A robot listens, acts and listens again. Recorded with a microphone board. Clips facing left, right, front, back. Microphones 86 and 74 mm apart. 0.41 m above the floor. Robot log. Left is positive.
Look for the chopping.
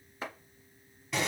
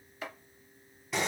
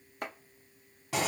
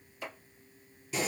note: The chopping: 30° left.
cmd yaw +30
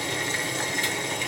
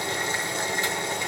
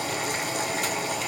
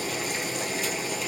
cmd idle
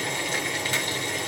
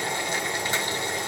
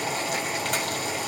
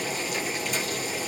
cmd idle
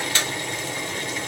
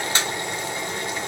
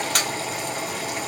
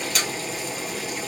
end: I heard chopping from this way, but can't make it out now.